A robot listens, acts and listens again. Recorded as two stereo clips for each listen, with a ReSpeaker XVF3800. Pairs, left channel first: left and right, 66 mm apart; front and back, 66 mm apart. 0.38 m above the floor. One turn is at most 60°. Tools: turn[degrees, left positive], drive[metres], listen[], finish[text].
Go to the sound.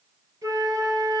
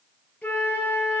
Thought: The flute: 65° right.
Action: turn[-60]
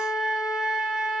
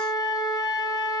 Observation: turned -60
Action: drive[1.0]
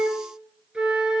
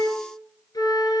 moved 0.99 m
Thought: The flute is now 15° right.
Action: turn[-15]
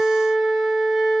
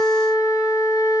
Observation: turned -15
Action: drive[1.0]
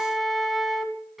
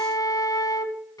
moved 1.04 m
Action: drive[1.0]
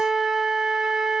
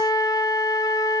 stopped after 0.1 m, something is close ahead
Action: finish[I am next to the flute.]